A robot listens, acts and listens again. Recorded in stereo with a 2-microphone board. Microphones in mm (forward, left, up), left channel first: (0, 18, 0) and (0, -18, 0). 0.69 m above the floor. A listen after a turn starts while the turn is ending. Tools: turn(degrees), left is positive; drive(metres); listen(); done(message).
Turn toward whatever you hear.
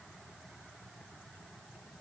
listen()
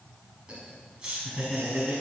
turn(degrees=-20)
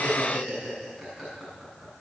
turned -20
turn(degrees=30)
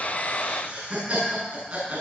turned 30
turn(degrees=-30)
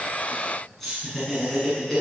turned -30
done("Found it: laughter, straight ahead, over 4 m away.")